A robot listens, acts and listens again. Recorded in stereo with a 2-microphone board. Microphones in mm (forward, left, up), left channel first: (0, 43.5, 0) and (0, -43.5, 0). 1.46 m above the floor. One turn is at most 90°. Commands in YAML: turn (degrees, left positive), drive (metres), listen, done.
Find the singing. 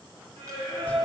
turn: -90
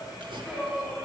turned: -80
turn: -15
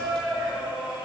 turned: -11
turn: -10
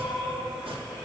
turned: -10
done: "Found it: singing, straight ahead, 2 to 4 m away."